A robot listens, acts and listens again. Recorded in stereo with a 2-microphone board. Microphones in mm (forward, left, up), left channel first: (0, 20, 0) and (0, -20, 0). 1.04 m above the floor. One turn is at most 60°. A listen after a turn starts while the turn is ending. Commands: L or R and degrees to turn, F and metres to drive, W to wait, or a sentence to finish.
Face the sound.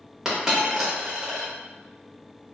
R30
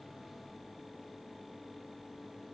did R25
W
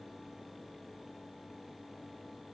I heard a dropped coin, but can't make it out now. It was about 15° left or 145° right.